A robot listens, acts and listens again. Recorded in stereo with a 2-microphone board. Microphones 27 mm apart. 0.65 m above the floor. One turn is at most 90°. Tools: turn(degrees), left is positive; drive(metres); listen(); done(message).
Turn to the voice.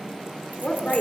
turn(degrees=50)
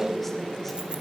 done("Found it: a woman speaking, straight ahead, 2 to 4 m away.")